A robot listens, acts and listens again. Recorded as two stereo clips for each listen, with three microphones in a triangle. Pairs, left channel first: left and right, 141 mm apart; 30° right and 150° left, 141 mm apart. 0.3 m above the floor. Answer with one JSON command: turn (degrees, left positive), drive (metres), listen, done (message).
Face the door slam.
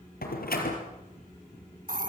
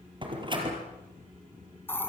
{"turn": 95}
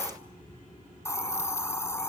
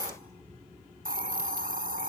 {"done": "I heard a door slam from this way, but can't make it out now."}